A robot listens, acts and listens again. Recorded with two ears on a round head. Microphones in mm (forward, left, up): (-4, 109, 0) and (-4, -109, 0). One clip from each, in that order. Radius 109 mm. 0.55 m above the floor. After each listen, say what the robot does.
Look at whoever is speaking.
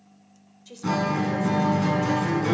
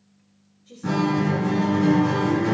Turn 70° left.
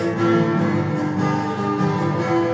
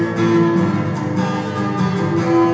Keep listening.
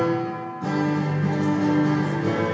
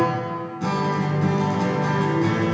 Keep listening.
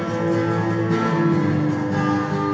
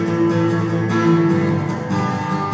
I heard a woman speaking, but can't make it out now. It was about straight ahead or 40° left.